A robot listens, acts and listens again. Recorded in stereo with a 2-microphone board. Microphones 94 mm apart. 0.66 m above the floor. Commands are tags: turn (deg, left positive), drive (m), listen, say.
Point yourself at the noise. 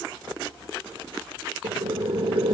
<turn deg="-70"/>
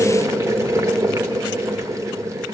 <turn deg="-35"/>
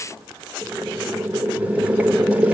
<turn deg="-15"/>
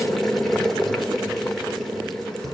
<say>Facing the boiling, 1 to 2 m away.</say>